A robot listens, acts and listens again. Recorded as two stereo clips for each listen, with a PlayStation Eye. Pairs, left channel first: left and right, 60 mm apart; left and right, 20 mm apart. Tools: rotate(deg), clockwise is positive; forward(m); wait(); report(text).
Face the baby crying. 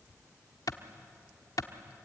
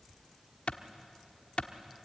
wait()
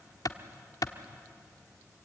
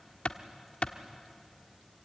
wait()
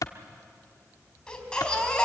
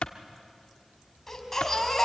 rotate(-30)
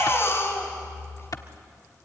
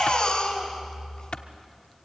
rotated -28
rotate(-140)
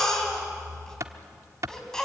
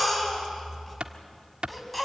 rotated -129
rotate(-10)
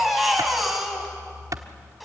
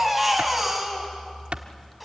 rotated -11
report("Found it: a baby crying, straight ahead, 2 to 4 m away.")